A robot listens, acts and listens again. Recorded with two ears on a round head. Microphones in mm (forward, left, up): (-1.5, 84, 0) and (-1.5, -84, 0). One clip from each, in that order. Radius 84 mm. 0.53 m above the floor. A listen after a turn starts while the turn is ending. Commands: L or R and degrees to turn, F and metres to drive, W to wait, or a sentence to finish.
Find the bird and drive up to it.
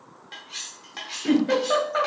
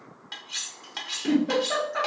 W
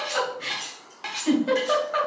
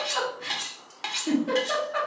W
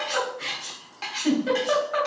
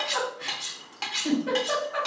I can't make out a bird to turn to.